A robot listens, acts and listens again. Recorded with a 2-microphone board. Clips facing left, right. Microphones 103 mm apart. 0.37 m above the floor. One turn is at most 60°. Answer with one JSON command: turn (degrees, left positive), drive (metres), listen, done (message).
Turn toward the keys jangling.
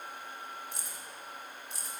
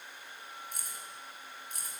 {"turn": -50}
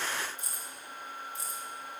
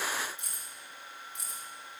{"turn": -60}
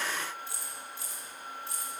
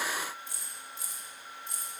{"turn": -20}
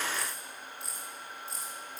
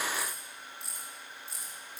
{"done": "Found it: keys jangling, straight ahead."}